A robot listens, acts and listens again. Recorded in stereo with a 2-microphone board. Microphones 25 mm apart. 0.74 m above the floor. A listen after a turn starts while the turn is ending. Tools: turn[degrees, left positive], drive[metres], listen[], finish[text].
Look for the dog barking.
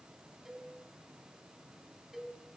Action: listen[]
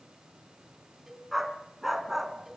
Action: turn[-30]
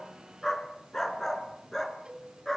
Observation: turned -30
Thought: So it is at 10° left.
Action: turn[10]
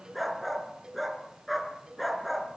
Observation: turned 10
Action: finish[Facing the dog barking, 2 to 4 m away.]